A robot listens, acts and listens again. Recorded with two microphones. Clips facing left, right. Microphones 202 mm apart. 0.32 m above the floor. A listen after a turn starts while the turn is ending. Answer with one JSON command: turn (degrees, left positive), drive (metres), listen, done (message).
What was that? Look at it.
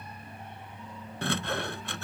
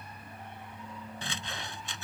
{"turn": 70}
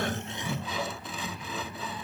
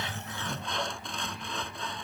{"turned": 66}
{"done": "Facing the sawing."}